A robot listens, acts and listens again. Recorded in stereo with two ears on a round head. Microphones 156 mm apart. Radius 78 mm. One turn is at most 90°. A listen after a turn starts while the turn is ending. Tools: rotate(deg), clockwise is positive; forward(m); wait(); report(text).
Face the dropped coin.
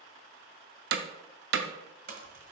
rotate(50)
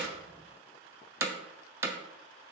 wait()
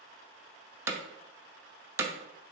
report("I heard a dropped coin, but can't make it out now. It was about straight ahead or 80° right.")